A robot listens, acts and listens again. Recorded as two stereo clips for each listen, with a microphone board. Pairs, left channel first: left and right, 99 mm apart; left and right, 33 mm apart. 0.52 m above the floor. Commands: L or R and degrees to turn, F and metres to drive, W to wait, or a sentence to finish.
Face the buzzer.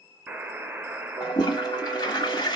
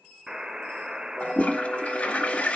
R25
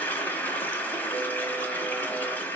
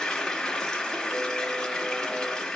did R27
W
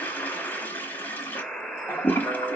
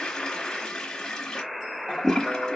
Facing the buzzer.